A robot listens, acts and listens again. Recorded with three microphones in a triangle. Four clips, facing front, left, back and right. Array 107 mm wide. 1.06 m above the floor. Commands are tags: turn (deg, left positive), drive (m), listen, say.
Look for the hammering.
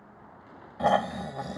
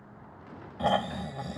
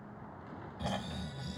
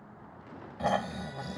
<listen/>
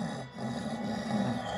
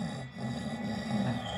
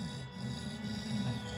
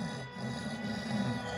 <listen/>
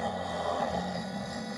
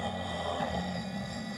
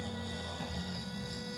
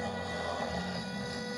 <say>I can't make out hammering to turn to.</say>